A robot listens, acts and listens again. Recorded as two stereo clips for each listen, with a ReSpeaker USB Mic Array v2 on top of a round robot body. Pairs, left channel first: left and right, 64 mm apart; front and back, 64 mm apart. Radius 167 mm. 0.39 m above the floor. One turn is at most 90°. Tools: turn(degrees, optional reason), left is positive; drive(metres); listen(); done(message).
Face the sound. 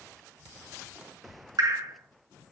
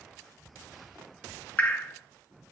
turn(degrees=-65, reason="The dripping: 65° right.")
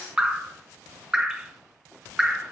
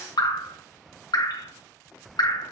turn(degrees=-15, reason="The dripping is now 15° right.")
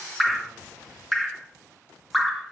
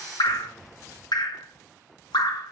done("Found it: dripping, straight ahead, 1 to 2 m away.")